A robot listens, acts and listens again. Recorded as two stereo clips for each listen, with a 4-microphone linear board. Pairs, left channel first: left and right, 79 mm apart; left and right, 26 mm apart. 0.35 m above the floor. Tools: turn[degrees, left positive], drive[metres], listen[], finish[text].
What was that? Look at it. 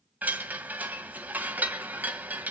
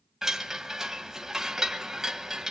Thought: The chime: about 20° right or 160° right.
Action: turn[-20]
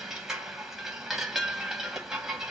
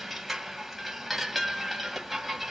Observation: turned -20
Action: finish[Found it: a chime, straight ahead, 2 to 4 m away.]